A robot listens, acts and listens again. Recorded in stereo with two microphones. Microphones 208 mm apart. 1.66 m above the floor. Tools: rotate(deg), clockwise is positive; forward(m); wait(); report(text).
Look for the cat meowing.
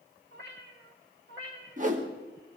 rotate(65)
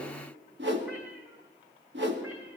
wait()
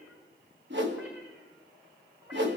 wait()
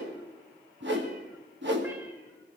report("I heard a cat meowing, but can't make it out now. It was about straight ahead or 50° right.")